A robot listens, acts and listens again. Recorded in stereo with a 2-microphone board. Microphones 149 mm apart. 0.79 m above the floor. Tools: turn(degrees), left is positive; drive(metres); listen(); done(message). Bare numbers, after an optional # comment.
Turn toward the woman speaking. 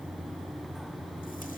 listen()
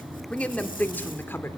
# The woman speaking: about 15° left or 165° left.
turn(15)
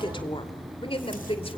# The woman speaking: about 40° left or 140° left.
turn(40)
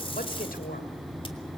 # So it is at 100° left.
turn(100)
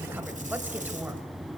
listen()
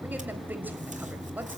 # The woman speaking is now 10° right.
turn(-10)
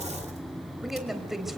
done("Facing the woman speaking.")